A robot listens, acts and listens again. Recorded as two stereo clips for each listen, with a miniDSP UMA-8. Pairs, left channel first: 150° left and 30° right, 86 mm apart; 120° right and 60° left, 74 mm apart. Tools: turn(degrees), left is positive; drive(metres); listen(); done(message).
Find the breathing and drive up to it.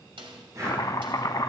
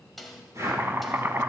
turn(degrees=15)
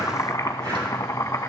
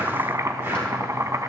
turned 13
listen()
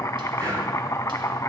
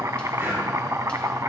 drive(metres=1.0)
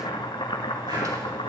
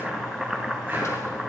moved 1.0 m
listen()
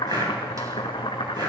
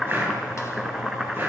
drive(metres=1.0)
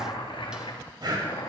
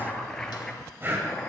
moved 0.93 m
drive(metres=1.0)
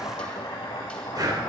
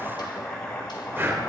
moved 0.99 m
drive(metres=1.0)
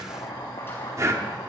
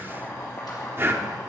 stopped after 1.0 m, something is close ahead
turn(degrees=15)
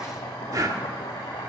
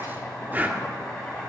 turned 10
done("Arrived at the breathing, straight ahead.")